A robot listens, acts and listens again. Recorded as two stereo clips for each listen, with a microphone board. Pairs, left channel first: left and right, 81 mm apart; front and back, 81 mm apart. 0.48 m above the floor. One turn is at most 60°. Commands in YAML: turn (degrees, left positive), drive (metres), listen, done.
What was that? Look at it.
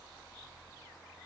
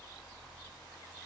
listen: true
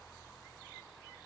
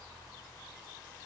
listen: true
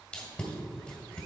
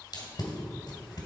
turn: 15
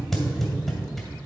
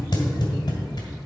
done: "Found it: tape being pulled, straight ahead, 1 to 2 m away."